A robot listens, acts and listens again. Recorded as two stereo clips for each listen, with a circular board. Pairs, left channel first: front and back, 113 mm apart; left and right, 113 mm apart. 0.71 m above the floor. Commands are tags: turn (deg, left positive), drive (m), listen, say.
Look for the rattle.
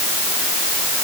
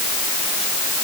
<listen/>
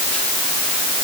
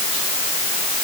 <listen/>
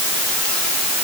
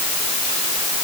<say>I can't make out a rattle.</say>